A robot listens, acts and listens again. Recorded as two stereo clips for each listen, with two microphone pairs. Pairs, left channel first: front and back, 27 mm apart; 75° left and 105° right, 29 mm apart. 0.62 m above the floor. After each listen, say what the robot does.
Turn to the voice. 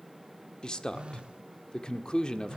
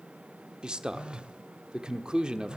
Turn 50° right.
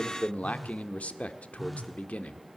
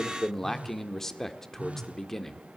Facing the man speaking, 1 to 2 m away.